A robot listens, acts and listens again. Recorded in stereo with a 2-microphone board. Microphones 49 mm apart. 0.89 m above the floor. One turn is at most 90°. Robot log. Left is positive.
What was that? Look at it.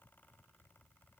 cmd idle
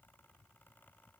cmd idle
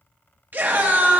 note: The scream: about 40° right or 140° right.
cmd yaw -40
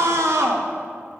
note: So it is at 100° right.
cmd yaw -90
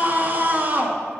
note: The scream is now 35° right.
cmd yaw -35
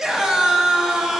note: The scream is now 10° right.
cmd yaw -10
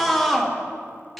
end: Facing the scream, 1 to 2 m away.